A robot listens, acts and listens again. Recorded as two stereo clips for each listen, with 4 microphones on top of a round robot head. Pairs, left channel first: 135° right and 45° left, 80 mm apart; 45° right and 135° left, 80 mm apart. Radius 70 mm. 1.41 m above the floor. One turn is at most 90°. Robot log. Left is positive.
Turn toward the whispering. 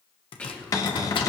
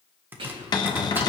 note: The whispering: 150° left.
cmd yaw +90
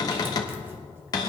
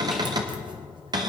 note: Nothing new. It was at 60° left.
cmd yaw +60
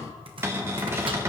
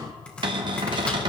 cmd idle
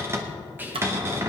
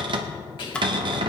note: The whispering is now 20° right.
cmd yaw -20
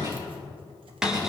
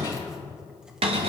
cmd idle
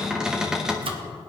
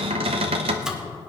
cmd idle
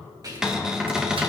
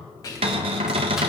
end: Found it: whispering, straight ahead, 2 to 4 m away.